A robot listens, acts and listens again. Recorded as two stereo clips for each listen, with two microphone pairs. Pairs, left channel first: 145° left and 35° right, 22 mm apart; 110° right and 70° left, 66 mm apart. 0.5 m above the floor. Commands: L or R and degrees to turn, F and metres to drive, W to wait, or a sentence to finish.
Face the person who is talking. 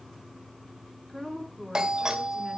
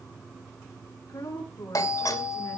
R135
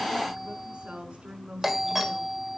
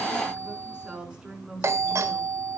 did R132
Facing the woman speaking.